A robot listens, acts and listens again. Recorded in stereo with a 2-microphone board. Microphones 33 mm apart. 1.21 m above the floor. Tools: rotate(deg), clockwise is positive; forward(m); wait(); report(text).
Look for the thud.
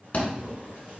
rotate(-45)
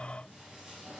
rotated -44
wait()
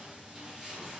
report("I heard a thud, but can't make it out now. It was about straight ahead or 90° left.")